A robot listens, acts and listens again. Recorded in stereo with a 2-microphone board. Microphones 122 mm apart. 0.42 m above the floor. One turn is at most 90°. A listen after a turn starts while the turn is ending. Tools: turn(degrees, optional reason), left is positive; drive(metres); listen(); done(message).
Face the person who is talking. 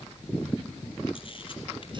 listen()
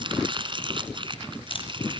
listen()
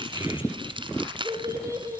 turn(degrees=-25, reason="The child speaking: about 25° right or 155° right.")
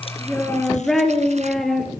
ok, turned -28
done("Found it: a child speaking, straight ahead, over 4 m away.")